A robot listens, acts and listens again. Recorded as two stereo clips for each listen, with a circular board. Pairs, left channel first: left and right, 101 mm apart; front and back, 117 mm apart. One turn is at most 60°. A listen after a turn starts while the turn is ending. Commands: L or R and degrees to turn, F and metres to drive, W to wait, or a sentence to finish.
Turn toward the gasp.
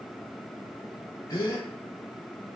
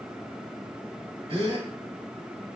L60
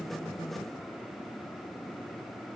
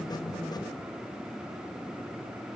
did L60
L60
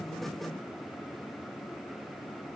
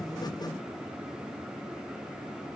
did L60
L20
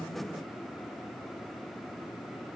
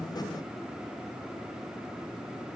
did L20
Facing where the gasp came from. I can't hear it now.